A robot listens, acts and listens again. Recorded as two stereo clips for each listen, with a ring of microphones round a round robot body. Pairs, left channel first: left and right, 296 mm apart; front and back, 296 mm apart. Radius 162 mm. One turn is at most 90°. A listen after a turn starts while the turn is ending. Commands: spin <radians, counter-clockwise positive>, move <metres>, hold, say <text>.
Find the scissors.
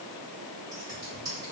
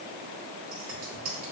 spin -1.57
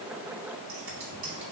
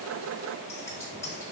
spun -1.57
spin -1.40
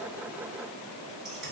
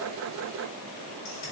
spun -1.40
hold
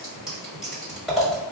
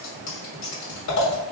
say Facing the scissors.